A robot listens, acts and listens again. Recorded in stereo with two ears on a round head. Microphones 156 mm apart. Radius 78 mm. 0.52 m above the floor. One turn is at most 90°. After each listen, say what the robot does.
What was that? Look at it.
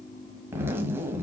Turn 30° right.
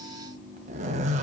Turn 90° right.
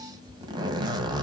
Turn 25° right.
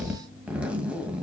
Found it: a zipper, straight ahead, 1 to 2 m away.